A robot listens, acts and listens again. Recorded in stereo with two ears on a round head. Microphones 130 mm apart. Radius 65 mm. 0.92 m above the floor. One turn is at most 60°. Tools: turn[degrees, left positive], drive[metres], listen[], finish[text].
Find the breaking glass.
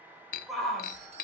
Thought: The breaking glass: about 65° left or 115° left.
Action: turn[60]
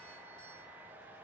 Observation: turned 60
Action: listen[]
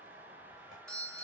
Action: finish[I heard breaking glass, but can't make it out now. It was about 5° left or 55° left.]